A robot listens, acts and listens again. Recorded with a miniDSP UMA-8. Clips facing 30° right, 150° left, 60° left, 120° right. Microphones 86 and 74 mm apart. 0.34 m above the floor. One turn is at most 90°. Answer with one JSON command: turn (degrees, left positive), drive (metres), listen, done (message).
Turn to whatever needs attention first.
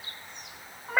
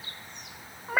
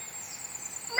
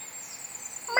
{"listen": true}
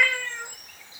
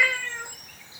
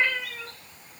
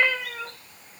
{"listen": true}
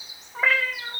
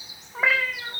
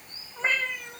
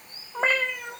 {"done": "I can't make out anything urgent to turn to."}